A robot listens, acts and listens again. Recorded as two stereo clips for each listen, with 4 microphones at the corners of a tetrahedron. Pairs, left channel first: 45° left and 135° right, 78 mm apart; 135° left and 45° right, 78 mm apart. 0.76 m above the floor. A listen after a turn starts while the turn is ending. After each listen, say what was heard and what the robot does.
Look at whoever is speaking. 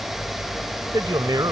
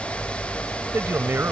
The man speaking: 105° right. Turn 105° right.
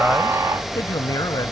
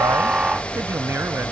The man speaking is now 10° left. Turn 10° left.
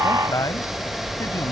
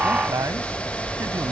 Facing the man speaking.